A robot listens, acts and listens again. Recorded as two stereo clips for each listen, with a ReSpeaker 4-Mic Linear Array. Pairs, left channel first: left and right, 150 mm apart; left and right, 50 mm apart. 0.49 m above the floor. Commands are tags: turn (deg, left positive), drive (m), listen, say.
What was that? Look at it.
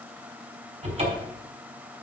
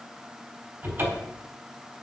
<turn deg="-45"/>
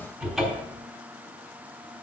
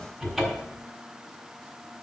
<say>Found it: a cupboard door, straight ahead.</say>